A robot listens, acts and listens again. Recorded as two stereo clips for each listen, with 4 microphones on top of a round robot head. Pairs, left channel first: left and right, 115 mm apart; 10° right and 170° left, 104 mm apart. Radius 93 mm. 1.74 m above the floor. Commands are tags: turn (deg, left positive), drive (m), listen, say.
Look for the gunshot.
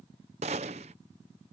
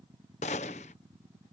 <turn deg="-45"/>
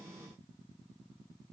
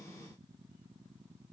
<say>I heard a gunshot from this way, but can't make it out now.</say>